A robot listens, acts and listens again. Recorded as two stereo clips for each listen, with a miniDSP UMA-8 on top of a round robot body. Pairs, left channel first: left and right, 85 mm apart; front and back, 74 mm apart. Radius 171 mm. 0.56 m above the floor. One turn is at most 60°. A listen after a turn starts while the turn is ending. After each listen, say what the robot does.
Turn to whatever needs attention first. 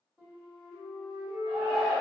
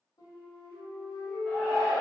Turn 60° right.
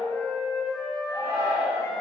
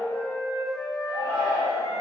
Turn 35° right.
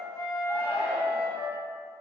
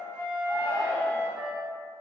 Turn 15° right.
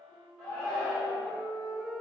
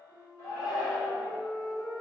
Found it: a shout, straight ahead, 1 to 2 m away.